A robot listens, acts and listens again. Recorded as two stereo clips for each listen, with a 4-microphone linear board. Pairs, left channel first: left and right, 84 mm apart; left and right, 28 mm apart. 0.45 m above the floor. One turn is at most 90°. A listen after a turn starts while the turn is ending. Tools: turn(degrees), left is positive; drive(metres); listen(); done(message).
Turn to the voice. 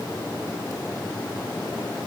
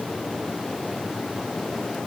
listen()
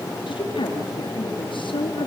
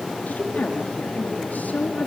turn(degrees=70)
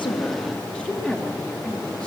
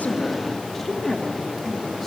done("Facing the woman speaking, over 4 m away.")